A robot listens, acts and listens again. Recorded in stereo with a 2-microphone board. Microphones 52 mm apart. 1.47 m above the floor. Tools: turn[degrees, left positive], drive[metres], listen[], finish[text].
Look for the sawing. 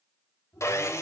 Thought: The sawing: about 65° left or 115° left.
Action: turn[65]
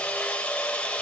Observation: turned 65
Thought: So it is at 25° left.
Action: turn[25]
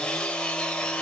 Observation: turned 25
Thought: The sawing is now 20° left.
Action: turn[20]
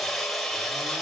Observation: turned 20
Action: finish[Found it: sawing, straight ahead, 2 to 4 m away.]